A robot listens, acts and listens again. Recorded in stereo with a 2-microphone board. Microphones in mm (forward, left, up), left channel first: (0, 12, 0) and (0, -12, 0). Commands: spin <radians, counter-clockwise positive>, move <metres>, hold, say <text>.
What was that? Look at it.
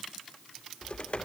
spin 0.96
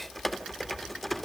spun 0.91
spin 0.17
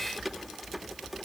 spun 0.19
say Facing the typing on a keyboard.